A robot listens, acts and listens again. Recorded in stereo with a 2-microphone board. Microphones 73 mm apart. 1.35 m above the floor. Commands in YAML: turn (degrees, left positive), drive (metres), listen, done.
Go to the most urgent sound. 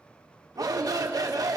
turn: -55
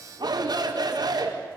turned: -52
turn: -70
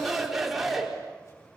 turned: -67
drive: 1.0
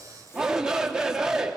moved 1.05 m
turn: -10
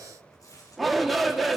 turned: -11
drive: 1.0
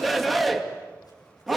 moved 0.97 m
drive: 1.0
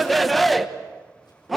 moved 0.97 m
drive: 1.0
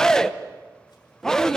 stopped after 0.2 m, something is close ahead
done: "I am next to the shout."